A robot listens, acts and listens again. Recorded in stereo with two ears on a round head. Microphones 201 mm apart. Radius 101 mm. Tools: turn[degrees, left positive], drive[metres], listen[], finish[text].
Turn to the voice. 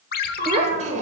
Thought: The child speaking: about 35° right or 145° right.
Action: turn[-35]
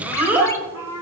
Thought: So it is at 10° right.
Action: turn[-10]
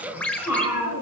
Thought: The child speaking is now 10° right.
Action: turn[-10]
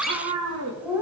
Thought: The child speaking is now 10° right.
Action: turn[-10]
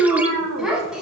Action: finish[Found it: a child speaking, straight ahead.]